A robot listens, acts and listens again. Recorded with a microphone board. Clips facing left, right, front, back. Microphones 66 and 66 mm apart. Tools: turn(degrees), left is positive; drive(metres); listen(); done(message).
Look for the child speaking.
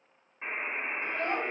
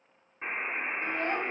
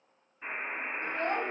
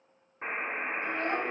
turn(degrees=30)
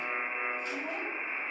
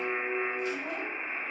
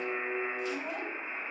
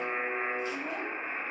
turn(degrees=35)
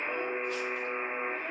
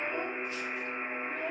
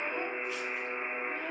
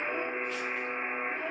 done("Found it: a child speaking, straight ahead, 2 to 4 m away.")